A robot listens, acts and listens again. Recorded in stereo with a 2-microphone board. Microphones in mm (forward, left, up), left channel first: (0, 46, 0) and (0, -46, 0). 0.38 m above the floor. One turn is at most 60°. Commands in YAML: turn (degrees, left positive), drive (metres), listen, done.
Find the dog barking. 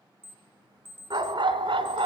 turn: -60
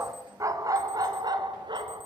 turn: -60
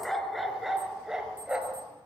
turn: -10
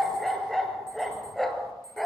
done: "Found it: a dog barking, straight ahead, 2 to 4 m away."